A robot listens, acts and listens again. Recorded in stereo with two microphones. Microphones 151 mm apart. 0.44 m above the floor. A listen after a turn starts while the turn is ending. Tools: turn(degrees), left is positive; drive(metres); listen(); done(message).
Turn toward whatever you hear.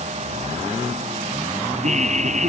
turn(degrees=-55)
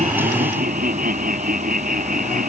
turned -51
turn(degrees=-70)
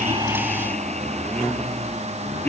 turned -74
turn(degrees=10)
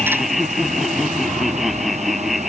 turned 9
done("Found it: laughter, straight ahead.")